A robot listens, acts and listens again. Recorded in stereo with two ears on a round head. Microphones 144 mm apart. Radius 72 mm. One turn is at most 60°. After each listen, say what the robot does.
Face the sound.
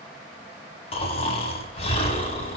Turn 40° left.
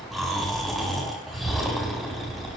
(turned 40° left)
Found it: snoring, straight ahead, over 4 m away.